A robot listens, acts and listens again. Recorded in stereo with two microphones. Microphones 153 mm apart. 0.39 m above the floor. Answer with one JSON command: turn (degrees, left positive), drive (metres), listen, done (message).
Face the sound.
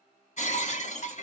{"turn": 50}
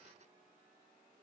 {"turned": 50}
{"listen": true}
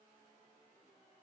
{"done": "I heard breaking glass, but can't make it out now. It was about straight ahead or 80° left."}